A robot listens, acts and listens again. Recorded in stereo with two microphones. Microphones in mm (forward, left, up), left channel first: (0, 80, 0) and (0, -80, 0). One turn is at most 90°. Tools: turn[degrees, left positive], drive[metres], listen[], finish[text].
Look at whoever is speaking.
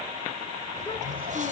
Action: listen[]
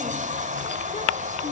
Action: listen[]
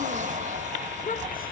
Thought: The child speaking: about 60° left or 120° left.
Action: turn[60]
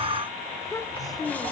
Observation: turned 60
Thought: So it is at 25° left.
Action: turn[25]
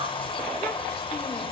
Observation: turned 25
Action: listen[]
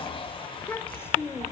Thought: The child speaking is now 15° left.
Action: turn[15]
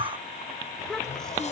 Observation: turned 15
Action: finish[Found it: a child speaking, straight ahead.]